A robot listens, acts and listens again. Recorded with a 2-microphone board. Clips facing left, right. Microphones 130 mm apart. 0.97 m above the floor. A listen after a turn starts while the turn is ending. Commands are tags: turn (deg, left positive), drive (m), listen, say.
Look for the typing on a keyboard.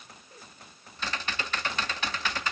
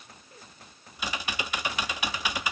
<turn deg="-30"/>
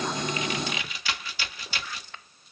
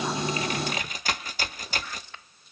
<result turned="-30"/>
<turn deg="-135"/>
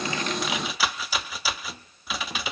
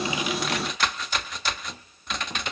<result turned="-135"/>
<say>Facing the typing on a keyboard, under 1 m away.</say>